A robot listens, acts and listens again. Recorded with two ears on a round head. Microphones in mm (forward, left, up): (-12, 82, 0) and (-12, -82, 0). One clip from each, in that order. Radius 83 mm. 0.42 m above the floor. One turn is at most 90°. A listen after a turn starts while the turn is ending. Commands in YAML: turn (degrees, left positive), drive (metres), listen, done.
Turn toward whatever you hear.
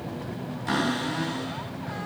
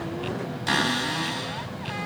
turn: -55
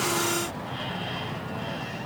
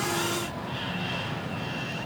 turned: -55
listen: true
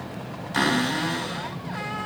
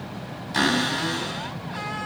done: "Facing the cupboard door."